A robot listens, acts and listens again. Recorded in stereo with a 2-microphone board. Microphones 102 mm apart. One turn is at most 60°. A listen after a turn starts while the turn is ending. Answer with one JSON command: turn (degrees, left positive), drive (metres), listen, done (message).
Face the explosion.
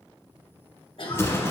{"turn": 25}
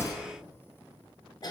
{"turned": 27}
{"listen": true}
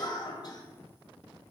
{"done": "I heard an explosion, but can't make it out now. It was about straight ahead or 125° left."}